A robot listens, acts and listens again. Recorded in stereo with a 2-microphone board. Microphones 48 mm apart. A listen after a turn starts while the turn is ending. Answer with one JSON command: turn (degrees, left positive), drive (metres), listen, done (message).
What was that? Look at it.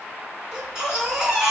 {"turn": -30}
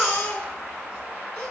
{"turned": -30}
{"turn": 20}
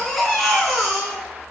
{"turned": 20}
{"done": "Facing the baby crying."}